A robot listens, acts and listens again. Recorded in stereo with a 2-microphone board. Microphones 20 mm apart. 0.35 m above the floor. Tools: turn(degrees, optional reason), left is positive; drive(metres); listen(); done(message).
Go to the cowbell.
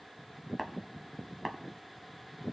listen()
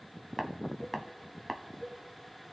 turn(degrees=60, reason="The cowbell: about 60° left or 120° left.")
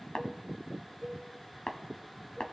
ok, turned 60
turn(degrees=20, reason="So it is at 20° left.")
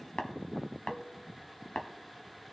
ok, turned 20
listen()
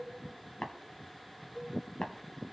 drive(metres=1.0)
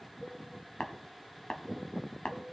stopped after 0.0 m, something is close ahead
done("Something is in my way. I am facing the cowbell but have not reached it.")